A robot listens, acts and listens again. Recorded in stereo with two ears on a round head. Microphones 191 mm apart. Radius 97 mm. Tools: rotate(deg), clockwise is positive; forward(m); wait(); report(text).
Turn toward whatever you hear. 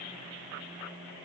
wait()
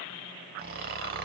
rotate(45)
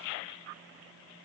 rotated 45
wait()
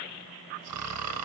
rotate(85)
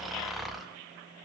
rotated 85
report("Facing the snoring, under 1 m away.")